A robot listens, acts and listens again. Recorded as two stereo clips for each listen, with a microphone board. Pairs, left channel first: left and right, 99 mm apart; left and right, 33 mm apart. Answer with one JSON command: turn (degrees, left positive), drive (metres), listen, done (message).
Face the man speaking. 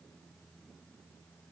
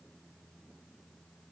{"listen": true}
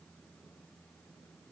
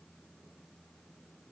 {"listen": true}
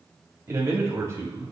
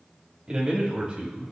{"turn": -35}
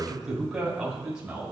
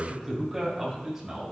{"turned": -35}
{"turn": -10}
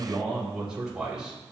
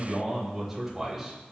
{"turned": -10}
{"done": "Facing the man speaking."}